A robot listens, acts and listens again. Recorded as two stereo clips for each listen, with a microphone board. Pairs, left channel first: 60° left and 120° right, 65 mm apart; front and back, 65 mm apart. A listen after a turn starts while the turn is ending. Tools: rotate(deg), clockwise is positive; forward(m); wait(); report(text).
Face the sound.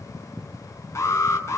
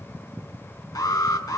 rotate(-15)
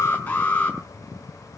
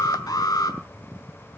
report("Found it: an alarm, straight ahead, over 4 m away.")